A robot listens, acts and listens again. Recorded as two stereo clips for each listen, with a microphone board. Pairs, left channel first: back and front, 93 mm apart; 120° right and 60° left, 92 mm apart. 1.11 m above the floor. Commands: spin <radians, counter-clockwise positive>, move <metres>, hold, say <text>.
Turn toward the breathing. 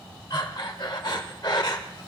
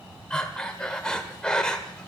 spin 2.79
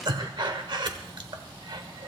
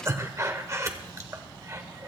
spin 0.17
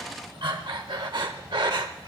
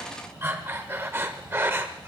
say Found it: breathing, straight ahead.